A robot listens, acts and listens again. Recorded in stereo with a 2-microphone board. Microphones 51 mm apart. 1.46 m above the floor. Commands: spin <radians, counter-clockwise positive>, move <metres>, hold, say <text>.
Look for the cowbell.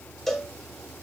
spin 0.52
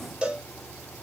spin -0.35
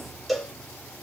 say Found it: a cowbell, straight ahead, under 1 m away.